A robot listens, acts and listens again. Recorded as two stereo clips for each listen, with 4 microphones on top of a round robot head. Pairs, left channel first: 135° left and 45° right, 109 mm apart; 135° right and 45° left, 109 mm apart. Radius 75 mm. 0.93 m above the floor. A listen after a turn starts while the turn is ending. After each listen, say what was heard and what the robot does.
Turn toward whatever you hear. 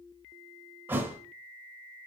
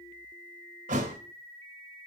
The thud: 30° left. Turn 30° left.
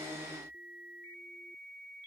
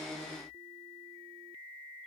I heard a thud from this way, but can't make it out now.